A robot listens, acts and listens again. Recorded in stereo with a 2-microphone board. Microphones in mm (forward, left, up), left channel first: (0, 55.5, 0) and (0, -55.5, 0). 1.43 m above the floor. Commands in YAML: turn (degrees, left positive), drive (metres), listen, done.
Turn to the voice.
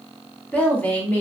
turn: 30
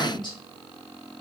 turn: 135
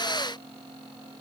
listen: true
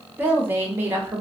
turn: -20
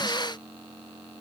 listen: true
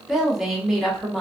done: "Found it: a woman speaking, straight ahead."